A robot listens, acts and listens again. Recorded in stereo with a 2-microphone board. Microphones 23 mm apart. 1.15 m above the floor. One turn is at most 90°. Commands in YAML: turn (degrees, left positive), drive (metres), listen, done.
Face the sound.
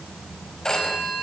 turn: 30
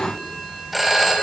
done: "Facing the phone ringing, over 4 m away."